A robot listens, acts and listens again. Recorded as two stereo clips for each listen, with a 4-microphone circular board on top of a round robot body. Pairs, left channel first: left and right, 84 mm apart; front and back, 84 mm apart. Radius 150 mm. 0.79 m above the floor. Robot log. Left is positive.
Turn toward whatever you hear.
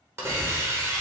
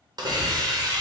note: The hiss: 150° right.
cmd yaw -150
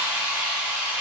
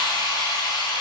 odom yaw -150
note: The hiss is now 20° right.
cmd yaw -20
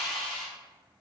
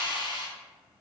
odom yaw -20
end: Found it: a hiss, straight ahead.